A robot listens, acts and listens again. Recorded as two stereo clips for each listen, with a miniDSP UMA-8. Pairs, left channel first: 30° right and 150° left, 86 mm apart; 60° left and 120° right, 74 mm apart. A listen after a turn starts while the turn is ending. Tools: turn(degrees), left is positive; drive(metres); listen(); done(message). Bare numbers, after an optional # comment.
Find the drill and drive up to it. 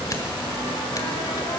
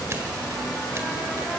listen()
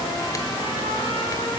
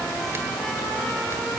listen()
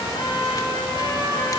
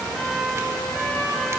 done("I can't make out a drill, only a trumpet.")